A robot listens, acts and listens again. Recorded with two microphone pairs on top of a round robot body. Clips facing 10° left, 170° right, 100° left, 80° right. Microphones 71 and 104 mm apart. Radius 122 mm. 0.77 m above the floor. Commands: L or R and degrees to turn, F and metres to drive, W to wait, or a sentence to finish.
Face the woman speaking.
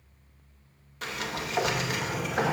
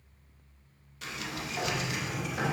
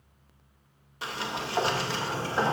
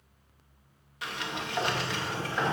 W
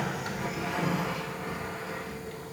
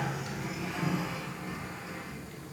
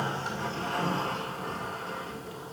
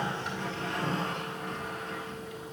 W
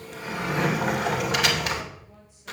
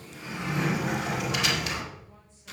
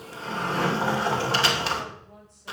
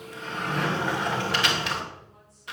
I can't make out a woman speaking to turn to.